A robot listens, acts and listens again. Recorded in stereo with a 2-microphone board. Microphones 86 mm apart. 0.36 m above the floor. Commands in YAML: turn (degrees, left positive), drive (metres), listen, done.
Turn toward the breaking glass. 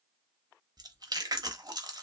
listen: true
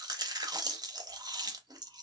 listen: true
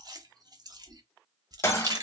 turn: 30
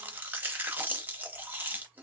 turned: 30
listen: true
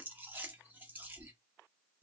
done: "I heard breaking glass, but can't make it out now. It was about straight ahead or 120° left."